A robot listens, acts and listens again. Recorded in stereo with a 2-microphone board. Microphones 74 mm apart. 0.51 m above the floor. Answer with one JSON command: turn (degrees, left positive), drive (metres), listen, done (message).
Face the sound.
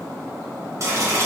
{"turn": -45}
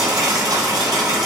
{"turn": -90}
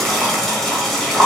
{"done": "Found it: boiling, straight ahead, 1 to 2 m away."}